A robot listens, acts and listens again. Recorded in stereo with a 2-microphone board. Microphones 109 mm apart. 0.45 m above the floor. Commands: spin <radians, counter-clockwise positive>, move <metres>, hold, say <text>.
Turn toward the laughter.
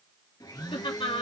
spin 1.05
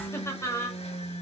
spin 0.52
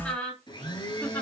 spin 0.26
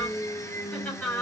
spin 0.17
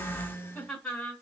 spin 0.17
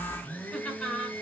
say Found it: laughter, straight ahead, 2 to 4 m away.